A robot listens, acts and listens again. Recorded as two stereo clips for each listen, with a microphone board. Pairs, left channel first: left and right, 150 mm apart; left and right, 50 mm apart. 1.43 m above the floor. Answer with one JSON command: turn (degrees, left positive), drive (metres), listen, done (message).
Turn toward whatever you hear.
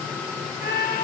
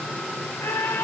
{"turn": 90}
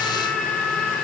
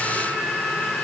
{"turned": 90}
{"turn": 10}
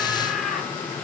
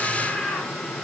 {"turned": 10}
{"done": "Facing the scream."}